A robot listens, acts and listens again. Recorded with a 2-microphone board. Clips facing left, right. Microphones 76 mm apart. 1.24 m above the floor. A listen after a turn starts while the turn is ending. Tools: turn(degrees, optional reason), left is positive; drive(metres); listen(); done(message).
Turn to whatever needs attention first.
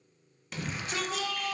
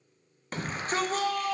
turn(degrees=-40, reason="The shout: about 40° right or 140° right.")
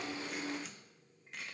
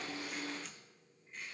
listen()
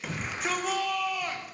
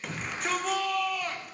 done("Facing the shout.")